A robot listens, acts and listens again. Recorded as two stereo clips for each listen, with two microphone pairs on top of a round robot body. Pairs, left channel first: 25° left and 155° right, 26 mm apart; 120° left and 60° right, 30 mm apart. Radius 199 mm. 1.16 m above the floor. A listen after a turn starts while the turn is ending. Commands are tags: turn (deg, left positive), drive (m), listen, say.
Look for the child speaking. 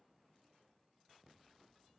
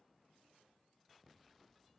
<listen/>
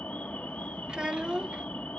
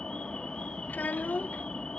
<turn deg="140"/>
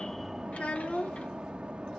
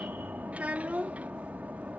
<turn deg="-20"/>
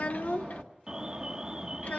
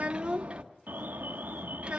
<say>Found it: a child speaking, straight ahead.</say>